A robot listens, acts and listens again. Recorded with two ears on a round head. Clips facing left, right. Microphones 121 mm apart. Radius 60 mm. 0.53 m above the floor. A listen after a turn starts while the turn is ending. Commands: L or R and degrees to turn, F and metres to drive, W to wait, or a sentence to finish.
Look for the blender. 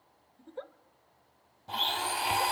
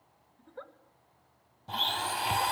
L30
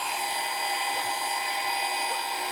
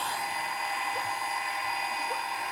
L145
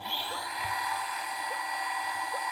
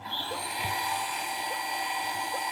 R25
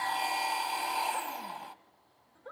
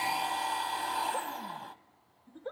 L10
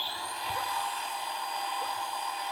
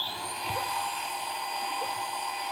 Facing the blender, 1 to 2 m away.